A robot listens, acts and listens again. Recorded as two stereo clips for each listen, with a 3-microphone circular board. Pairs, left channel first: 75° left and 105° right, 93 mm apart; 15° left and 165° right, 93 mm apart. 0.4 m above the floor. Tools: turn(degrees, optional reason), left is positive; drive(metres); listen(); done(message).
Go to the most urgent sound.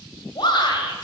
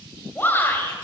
turn(degrees=75, reason="The shout: 75° left.")
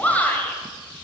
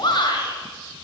drive(metres=1.0)
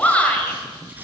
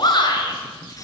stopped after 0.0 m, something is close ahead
done("Something is in my way. I am facing the shout but have not reached it.")